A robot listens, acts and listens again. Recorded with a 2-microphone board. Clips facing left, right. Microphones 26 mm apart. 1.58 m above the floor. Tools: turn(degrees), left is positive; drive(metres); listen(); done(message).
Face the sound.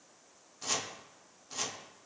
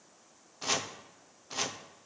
turn(degrees=-25)
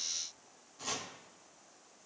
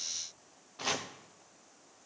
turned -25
turn(degrees=-125)
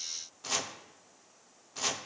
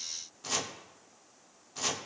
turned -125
turn(degrees=10)
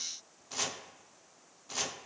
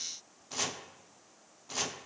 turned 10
done("Facing the chopping.")